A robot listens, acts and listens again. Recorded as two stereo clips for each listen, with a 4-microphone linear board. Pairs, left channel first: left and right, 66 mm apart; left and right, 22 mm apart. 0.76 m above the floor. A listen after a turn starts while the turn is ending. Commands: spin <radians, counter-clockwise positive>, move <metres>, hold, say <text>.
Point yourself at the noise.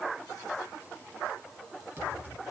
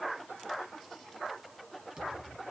spin -0.52
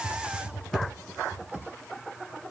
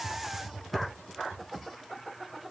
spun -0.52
say Facing the typing on a keyboard, 2 to 4 m away.